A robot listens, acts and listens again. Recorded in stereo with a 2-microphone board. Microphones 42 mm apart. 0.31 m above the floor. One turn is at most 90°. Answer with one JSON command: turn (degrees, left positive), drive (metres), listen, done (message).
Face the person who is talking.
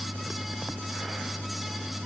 {"listen": true}
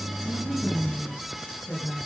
{"turn": 25}
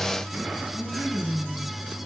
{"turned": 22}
{"done": "Found it: a woman speaking, straight ahead, over 4 m away."}